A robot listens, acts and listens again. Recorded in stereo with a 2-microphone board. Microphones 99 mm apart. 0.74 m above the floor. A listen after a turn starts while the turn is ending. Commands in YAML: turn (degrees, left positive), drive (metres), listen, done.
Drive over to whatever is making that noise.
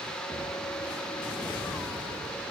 listen: true
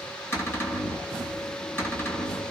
turn: 25
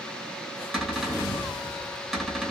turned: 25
drive: 1.0
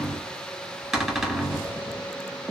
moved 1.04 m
drive: 1.0
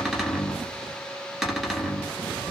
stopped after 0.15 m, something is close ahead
done: "Arrived at the cupboard door, straight ahead."